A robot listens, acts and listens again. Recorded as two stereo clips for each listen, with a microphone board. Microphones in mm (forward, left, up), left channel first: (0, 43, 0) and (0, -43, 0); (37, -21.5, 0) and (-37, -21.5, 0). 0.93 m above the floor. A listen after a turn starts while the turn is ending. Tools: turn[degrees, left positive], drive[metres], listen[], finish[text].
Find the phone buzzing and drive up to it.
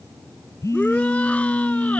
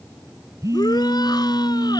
Thought: The phone buzzing: 140° left.
Action: turn[140]
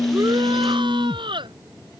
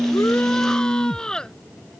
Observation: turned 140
Thought: The phone buzzing is now 45° left.
Action: turn[45]
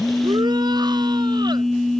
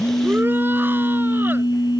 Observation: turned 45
Action: drive[1.0]
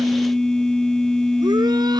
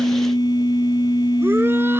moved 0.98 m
Thought: The phone buzzing is now 10° left.
Action: turn[10]
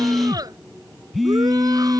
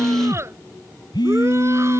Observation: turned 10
Action: drive[1.0]
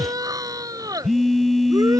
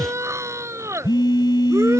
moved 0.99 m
Action: drive[1.0]
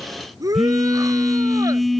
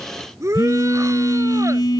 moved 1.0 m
Action: drive[1.0]
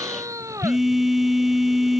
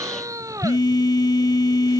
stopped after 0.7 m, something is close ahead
Action: finish[I am next to the phone buzzing.]